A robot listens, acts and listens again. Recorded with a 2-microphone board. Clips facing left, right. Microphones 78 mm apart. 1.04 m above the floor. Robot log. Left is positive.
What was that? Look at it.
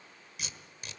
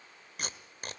note: The tape being pulled: about 55° right or 125° right.
cmd yaw -55
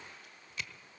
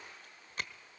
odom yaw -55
note: So it is at 55° right.
cmd yaw -55
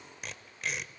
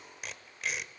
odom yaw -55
end: Facing the tape being pulled, 1 to 2 m away.